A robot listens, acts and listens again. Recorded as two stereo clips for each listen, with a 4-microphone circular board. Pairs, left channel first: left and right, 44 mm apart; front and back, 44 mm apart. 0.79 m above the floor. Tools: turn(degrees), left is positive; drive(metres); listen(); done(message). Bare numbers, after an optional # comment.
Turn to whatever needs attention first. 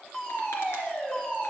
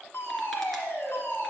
# The fire alarm: 25° left.
turn(25)
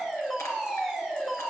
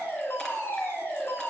# The fire alarm is now 10° left.
turn(10)
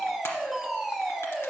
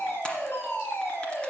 done("Facing the fire alarm.")